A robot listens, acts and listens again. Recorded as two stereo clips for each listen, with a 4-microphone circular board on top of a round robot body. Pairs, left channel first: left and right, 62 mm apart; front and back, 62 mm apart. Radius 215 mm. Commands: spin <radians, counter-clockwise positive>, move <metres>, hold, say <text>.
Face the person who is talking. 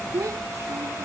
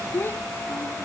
spin -0.96
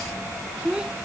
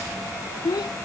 spin -0.17
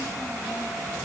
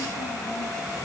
hold
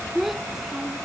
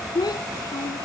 say Facing the child speaking.